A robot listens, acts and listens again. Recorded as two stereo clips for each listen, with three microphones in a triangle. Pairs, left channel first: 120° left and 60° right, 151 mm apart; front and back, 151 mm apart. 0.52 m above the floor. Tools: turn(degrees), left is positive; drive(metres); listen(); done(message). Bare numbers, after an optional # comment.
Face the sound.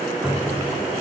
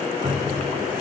# The cupboard door: 145° right.
turn(-145)
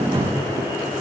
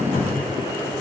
done("Facing the cupboard door.")